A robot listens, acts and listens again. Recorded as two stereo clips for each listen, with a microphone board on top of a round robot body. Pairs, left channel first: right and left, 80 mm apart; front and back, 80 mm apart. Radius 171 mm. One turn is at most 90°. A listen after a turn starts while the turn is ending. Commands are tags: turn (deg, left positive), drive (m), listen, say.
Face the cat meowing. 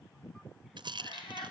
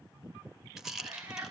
<turn deg="-90"/>
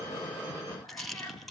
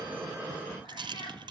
<turn deg="-25"/>
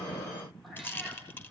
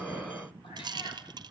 <listen/>
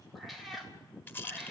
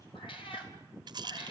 <say>Facing the cat meowing, 2 to 4 m away.</say>